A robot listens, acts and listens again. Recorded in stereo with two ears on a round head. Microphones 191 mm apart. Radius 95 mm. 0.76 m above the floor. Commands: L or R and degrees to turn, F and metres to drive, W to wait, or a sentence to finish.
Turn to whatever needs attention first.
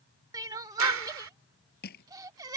R20
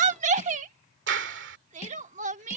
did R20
R145
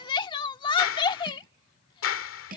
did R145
L25
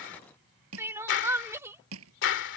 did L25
R15
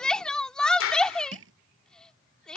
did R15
Found it: crying, straight ahead.